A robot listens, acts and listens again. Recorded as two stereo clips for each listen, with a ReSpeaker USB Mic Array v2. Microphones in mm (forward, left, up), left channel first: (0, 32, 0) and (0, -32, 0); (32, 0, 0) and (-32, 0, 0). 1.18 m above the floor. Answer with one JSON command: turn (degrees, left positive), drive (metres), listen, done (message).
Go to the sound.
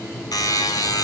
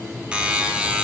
{"turn": 105}
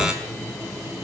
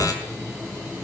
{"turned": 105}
{"listen": true}
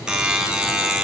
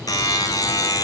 {"turn": -15}
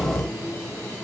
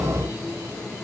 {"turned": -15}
{"listen": true}
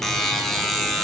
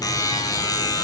{"drive": 1.0}
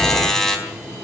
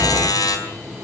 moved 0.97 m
{"drive": 1.0}
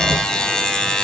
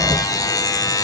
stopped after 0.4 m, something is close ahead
{"turn": 10}
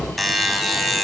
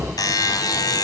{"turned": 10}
{"done": "Something is in my way. I am facing the buzzer but have not reached it."}